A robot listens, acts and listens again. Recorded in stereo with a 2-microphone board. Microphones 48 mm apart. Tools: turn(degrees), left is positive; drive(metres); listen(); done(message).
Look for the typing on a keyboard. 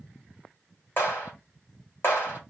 listen()
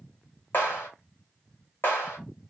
listen()
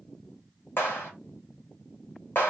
done("I can't make out typing on a keyboard, only a clap.")